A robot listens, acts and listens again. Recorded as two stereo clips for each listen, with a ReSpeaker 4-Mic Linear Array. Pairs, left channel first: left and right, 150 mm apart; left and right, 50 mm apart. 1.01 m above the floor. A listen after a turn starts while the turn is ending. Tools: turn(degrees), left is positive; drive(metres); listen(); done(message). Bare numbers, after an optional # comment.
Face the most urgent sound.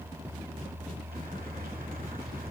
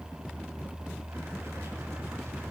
listen()
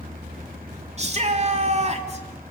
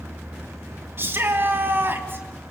# The shout: about 45° right or 135° right.
turn(-45)
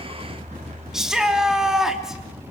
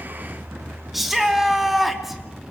done("Found it: a shout, straight ahead.")